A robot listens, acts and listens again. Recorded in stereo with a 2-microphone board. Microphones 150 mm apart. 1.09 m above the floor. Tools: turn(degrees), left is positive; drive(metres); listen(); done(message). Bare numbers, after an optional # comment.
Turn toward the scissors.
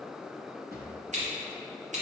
# The scissors: about 50° right or 130° right.
turn(-50)
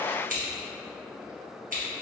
# So it is at 75° right.
turn(-75)
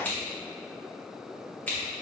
# The scissors is now 10° left.
turn(10)
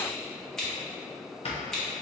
done("Found it: scissors, straight ahead.")